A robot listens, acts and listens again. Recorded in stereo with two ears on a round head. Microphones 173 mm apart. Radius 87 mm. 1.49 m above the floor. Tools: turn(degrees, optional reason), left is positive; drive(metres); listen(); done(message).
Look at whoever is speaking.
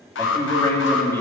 turn(degrees=30)
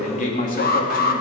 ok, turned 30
turn(degrees=135, reason="So it is at 135° left.")
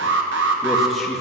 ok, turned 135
listen()
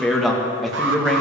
done("Facing the man speaking.")